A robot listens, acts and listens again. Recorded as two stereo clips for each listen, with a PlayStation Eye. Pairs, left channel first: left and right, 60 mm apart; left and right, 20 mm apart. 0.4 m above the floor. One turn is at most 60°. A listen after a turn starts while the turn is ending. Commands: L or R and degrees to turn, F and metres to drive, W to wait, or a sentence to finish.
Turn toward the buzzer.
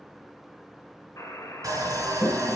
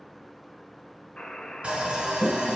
L60
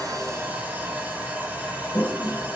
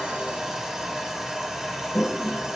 W
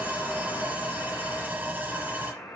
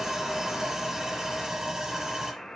L60
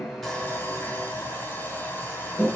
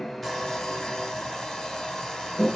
W
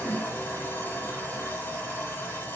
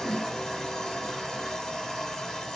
W
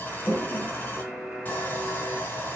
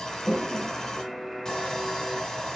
Facing the buzzer.